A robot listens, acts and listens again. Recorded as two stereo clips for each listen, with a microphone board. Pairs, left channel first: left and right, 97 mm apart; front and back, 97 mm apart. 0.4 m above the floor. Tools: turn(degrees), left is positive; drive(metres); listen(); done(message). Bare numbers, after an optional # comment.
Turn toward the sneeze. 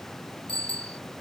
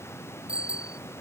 listen()
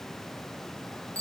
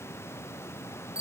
listen()
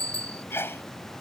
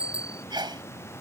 # The sneeze: 150° left.
turn(150)
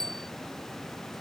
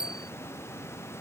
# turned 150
done("I heard a sneeze from this way, but can't make it out now.")